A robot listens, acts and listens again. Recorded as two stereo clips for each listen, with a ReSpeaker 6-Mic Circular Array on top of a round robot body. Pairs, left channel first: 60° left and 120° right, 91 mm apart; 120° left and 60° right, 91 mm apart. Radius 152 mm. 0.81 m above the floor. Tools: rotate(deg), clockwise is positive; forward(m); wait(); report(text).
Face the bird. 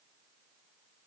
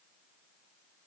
wait()
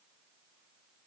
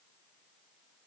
wait()
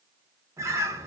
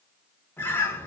rotate(175)
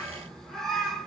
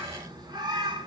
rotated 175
rotate(25)
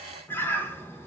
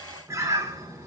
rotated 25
report("Found it: a bird, straight ahead.")